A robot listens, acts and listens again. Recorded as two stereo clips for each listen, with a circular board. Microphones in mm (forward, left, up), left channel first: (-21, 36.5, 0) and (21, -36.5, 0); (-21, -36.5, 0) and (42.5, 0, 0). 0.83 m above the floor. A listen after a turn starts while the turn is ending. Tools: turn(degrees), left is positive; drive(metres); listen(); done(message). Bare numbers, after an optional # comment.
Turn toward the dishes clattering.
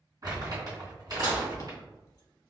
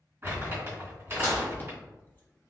# The dishes clattering: 85° right.
turn(-85)
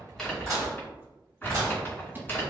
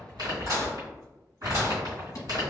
done("Facing the dishes clattering, 1 to 2 m away.")